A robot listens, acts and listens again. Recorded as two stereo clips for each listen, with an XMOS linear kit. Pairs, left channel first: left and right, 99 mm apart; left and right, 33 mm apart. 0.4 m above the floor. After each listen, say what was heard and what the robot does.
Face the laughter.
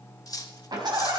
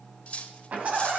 The laughter: about 45° right or 135° right. Turn 45° right.
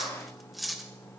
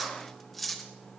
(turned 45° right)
Keep listening.
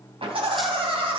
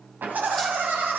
So it is at 85° right. Turn 85° right.
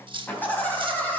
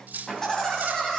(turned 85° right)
The laughter is now 20° left. Turn 20° left.
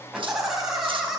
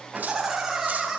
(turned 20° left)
Found it: laughter, straight ahead, 2 to 4 m away.